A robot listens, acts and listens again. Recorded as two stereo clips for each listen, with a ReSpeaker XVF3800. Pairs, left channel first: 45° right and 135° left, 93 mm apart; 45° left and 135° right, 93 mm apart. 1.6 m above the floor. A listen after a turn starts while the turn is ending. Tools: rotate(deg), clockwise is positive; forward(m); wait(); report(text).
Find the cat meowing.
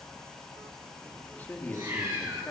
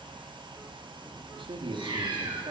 rotate(170)
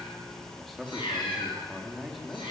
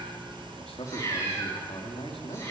rotate(20)
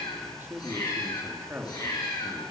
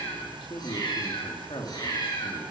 report("Facing the cat meowing.")